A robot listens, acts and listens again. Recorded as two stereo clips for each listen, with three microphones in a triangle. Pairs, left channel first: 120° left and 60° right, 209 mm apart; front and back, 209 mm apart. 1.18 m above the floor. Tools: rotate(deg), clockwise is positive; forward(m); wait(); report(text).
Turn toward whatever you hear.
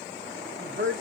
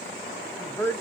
rotate(75)
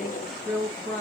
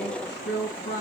rotate(-45)
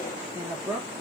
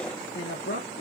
rotate(-25)
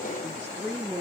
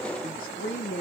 rotate(-20)
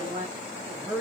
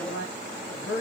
rotate(-15)
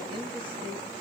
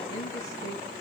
wait()
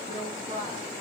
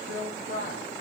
report("Facing the woman speaking, 2 to 4 m away.")